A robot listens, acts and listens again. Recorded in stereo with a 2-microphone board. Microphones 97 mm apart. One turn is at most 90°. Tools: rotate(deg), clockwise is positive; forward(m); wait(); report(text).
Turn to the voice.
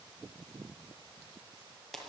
wait()
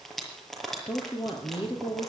rotate(-70)
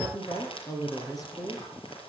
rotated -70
rotate(-40)
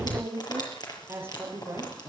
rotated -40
rotate(20)
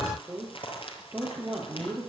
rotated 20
report("Found it: a woman speaking, straight ahead.")